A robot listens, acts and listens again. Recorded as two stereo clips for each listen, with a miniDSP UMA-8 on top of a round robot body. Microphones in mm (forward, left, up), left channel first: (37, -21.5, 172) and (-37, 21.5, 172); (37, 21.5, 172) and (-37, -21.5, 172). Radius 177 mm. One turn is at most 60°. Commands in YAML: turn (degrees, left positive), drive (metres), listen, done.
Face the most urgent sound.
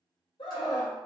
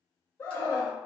turn: -30
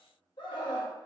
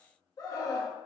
turn: -10
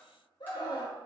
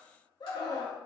done: "Found it: a scream, straight ahead, 1 to 2 m away."